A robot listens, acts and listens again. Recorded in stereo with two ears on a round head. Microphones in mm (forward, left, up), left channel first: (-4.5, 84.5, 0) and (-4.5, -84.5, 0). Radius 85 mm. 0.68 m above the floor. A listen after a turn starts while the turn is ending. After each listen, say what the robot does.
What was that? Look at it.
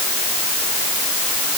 Keep listening.
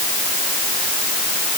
Keep listening.
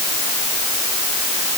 I can't make out anything.